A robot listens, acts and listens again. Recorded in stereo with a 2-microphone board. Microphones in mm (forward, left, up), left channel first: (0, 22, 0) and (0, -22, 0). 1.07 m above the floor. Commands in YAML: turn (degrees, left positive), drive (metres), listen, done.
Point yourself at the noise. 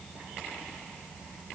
listen: true
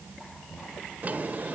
turn: -35
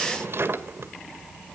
turn: -105
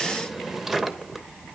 turn: -10
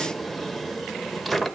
done: "Found it: a drawer, straight ahead."